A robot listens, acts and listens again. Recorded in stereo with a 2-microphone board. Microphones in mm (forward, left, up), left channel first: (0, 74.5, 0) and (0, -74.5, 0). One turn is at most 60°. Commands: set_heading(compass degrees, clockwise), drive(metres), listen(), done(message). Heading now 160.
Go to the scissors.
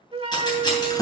set_heading(130)
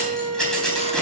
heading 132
drive(1.0)
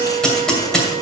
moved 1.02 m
drive(1.0)
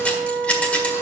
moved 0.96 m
set_heading(117)
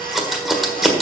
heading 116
drive(1.0)
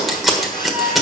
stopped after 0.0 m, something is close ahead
done("Arrived at the scissors, straight ahead.")